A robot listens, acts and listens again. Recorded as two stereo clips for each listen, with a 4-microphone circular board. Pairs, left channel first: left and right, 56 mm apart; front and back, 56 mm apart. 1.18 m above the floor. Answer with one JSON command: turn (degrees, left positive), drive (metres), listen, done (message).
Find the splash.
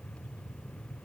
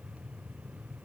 {"listen": true}
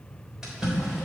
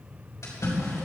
{"turn": -10}
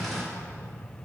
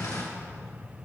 {"done": "Found it: a splash, straight ahead, 2 to 4 m away."}